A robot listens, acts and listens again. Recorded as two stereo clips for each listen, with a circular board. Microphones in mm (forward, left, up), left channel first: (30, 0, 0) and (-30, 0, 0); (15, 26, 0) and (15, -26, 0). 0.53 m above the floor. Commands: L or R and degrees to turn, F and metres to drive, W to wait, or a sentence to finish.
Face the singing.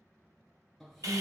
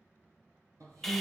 R85
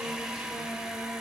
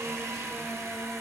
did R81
W
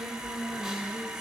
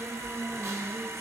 Facing the singing.